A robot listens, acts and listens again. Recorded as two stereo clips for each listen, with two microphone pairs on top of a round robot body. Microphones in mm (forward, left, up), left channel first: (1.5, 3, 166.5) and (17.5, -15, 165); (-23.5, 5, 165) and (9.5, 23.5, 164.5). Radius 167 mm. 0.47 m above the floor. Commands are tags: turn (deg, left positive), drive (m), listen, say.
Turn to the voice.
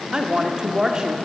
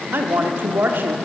<turn deg="10"/>
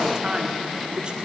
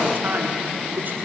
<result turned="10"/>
<say>Found it: a woman speaking, straight ahead.</say>